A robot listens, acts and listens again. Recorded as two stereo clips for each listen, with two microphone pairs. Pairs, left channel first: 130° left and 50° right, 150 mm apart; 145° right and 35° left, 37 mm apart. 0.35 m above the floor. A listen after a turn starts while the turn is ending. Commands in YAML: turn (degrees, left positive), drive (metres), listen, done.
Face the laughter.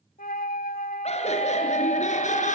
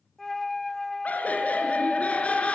turn: 160
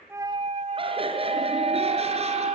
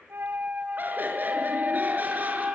done: "Facing the laughter, over 4 m away."